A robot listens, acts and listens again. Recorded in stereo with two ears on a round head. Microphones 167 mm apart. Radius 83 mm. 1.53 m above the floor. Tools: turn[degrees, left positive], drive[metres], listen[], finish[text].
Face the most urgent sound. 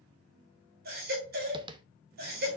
Thought: The baby crying: about 55° right or 125° right.
Action: turn[-55]
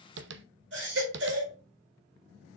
Thought: So it is at 70° right.
Action: turn[-70]
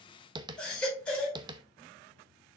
Action: finish[Found it: a baby crying, straight ahead, over 4 m away.]